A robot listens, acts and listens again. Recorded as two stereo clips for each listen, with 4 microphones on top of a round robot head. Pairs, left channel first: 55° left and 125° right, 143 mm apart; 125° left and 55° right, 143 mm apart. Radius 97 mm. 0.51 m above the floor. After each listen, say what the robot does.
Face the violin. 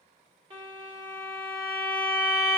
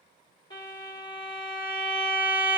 Turn 180° left.
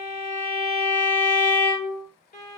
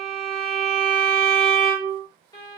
Turn 65° left.
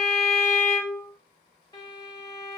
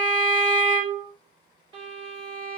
Facing the violin.